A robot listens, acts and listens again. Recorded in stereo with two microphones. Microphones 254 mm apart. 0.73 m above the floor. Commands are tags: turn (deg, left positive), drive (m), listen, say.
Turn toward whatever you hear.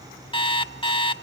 <turn deg="20"/>
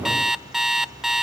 <say>Facing the alarm clock, under 1 m away.</say>